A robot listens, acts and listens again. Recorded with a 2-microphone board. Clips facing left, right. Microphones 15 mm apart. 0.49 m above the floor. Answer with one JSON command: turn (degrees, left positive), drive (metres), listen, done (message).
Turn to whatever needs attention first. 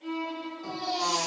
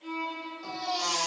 {"turn": -45}
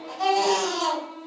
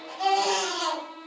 {"done": "Facing the baby crying."}